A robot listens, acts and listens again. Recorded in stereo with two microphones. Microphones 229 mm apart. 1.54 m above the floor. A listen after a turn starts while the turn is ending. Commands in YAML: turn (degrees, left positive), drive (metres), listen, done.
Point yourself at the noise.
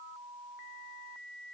listen: true
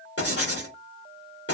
turn: 90
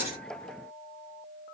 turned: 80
turn: 10
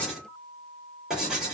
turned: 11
done: "Facing the writing, 2 to 4 m away."